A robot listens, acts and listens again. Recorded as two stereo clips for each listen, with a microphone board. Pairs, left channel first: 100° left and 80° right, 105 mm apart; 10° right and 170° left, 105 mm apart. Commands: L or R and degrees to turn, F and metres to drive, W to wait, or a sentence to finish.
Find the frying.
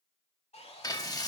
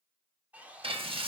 L150
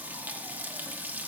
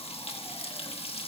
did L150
Facing the frying, 1 to 2 m away.